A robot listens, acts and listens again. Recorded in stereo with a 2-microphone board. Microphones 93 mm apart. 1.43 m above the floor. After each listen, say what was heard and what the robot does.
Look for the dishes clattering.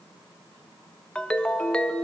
Keep listening.
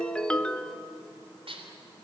Turn 90° right.
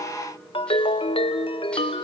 Keep listening.
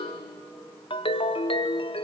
Keep listening.
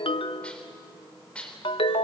The dishes clattering is now 15° left. Turn 15° left.
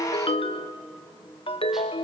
Keep listening.
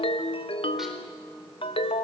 Keep listening.
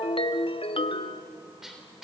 Facing the dishes clattering, 2 to 4 m away.